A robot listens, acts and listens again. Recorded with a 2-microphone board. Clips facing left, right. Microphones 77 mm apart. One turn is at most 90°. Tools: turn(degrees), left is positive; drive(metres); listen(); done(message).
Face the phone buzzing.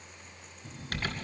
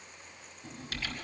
turn(degrees=-50)
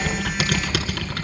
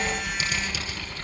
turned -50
listen()
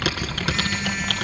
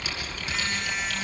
listen()
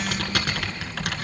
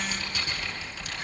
done("I heard a phone buzzing, but can't make it out now. It was about straight ahead or 80° right.")